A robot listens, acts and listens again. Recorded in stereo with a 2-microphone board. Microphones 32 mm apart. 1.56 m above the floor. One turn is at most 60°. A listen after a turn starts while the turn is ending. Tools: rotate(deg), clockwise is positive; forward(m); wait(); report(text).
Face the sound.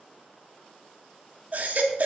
rotate(50)
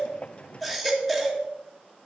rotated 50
report("Found it: a baby crying, straight ahead.")